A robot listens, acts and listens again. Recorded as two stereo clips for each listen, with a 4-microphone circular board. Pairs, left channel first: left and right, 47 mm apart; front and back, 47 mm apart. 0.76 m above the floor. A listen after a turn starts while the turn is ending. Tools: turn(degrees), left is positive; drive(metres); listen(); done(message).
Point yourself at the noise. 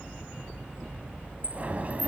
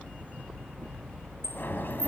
turn(degrees=-35)
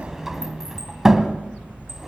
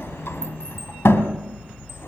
done("Found it: a sliding door, straight ahead, 1 to 2 m away.")